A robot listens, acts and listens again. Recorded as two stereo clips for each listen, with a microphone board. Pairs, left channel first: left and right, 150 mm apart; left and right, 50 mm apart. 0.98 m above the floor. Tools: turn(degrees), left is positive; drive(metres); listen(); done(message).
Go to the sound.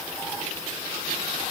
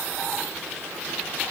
listen()
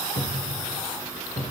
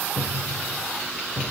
turn(degrees=35)
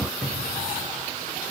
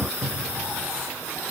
drive(metres=1.0)
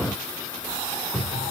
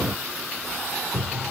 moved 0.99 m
drive(metres=1.0)
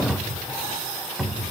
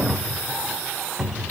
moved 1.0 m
drive(metres=1.0)
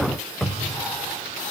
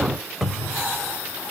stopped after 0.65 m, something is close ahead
done("Arrived at the cupboard door, straight ahead.")